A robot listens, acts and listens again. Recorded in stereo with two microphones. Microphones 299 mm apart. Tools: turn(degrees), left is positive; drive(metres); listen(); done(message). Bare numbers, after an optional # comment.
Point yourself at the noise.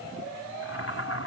# The boiling: about 50° left or 130° left.
turn(50)
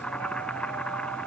done("Facing the boiling.")